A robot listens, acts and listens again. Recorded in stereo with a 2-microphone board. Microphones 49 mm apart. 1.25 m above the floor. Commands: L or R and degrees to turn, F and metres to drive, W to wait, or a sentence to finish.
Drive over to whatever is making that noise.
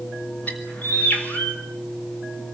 L35
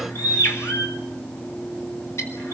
L110
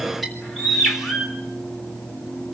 F1.0
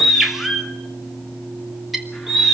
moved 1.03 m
F1.0
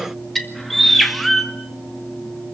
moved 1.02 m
F1.0
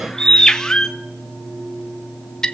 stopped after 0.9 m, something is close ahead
L15
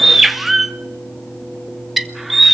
Arrived at the bird, straight ahead.